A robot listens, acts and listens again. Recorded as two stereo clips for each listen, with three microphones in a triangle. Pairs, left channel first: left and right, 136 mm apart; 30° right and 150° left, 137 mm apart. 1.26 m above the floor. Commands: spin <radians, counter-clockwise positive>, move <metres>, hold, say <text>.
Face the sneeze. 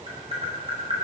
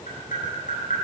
hold
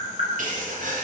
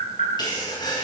spin -1.57
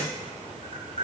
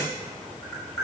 say I heard a sneeze from this way, but can't make it out now.